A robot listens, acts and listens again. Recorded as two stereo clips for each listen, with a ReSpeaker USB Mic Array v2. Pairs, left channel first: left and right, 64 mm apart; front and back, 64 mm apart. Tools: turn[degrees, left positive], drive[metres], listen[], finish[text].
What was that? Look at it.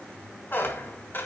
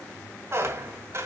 Thought: The squeak: 140° left.
Action: turn[140]
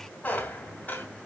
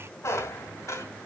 Thought: The squeak is now 30° left.
Action: turn[30]
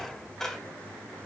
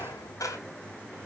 Action: finish[Facing the squeak.]